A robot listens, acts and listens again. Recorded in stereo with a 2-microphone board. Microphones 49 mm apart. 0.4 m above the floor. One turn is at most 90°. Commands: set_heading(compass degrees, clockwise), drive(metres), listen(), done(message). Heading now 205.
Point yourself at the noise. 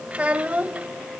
set_heading(230)
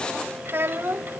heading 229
set_heading(319)
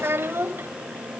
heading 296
set_heading(356)
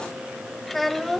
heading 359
done("Found it: a child speaking, straight ahead.")